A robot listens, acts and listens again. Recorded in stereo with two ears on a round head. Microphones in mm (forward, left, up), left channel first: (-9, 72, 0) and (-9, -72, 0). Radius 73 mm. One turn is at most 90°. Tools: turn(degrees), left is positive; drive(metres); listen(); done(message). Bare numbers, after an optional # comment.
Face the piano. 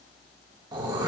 listen()
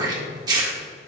listen()
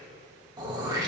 done("I can't make out a piano to turn to.")